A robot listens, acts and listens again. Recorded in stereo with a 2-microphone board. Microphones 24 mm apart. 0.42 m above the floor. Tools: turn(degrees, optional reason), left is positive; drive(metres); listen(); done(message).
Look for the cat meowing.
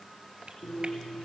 listen()
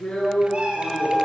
turn(degrees=-45, reason="The cat meowing: about 45° right or 135° right.")
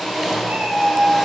turn(degrees=-80, reason="So it is at 80° right.")
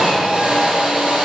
listen()
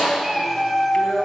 turn(degrees=-10, reason="The cat meowing is now 10° right.")
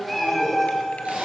done("Facing the cat meowing, 2 to 4 m away.")